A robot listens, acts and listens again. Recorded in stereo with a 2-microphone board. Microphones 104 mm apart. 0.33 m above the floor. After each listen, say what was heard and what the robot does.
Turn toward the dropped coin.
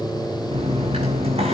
The dropped coin: about 75° right or 105° right. Turn 75° right.
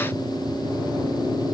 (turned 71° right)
Keep listening.
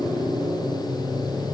I heard a dropped coin, but can't make it out now. It was about straight ahead or 35° right.